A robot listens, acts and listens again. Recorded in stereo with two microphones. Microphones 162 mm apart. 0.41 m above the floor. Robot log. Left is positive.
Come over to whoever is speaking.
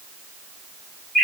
cmd idle
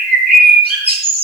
cmd idle
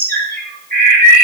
end: I can't make out anyone speaking to turn to.